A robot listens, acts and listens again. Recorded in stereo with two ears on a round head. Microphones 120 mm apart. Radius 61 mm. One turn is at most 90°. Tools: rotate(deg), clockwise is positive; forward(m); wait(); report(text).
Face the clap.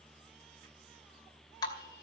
wait()
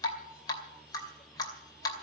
wait()
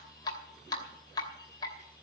report("I can't make out a clap to turn to.")